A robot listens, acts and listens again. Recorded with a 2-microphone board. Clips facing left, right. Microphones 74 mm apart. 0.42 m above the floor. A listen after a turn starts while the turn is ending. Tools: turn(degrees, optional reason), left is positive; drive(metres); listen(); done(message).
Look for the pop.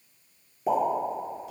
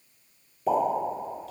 turn(degrees=25, reason="The pop: about 25° left or 155° left.")
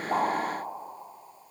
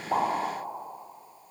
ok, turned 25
listen()
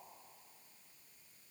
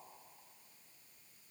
done("I heard a pop, but can't make it out now. It was about straight ahead or 130° left.")